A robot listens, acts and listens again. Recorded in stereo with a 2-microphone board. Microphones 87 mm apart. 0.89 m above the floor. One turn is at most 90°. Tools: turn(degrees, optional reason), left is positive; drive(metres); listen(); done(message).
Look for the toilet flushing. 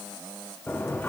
turn(degrees=20, reason="The toilet flushing: about 20° left or 160° left.")
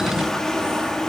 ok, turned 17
done("Facing the toilet flushing.")